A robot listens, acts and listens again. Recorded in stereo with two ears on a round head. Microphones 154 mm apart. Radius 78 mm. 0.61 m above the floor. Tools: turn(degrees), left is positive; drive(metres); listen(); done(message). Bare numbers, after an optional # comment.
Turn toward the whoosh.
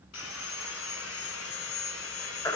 listen()
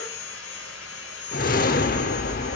# The whoosh: about 55° left or 125° left.
turn(55)
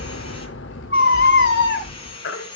# So it is at 70° left.
turn(70)
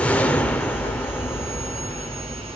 # The whoosh is now 10° left.
turn(10)
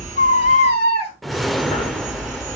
done("Facing the whoosh.")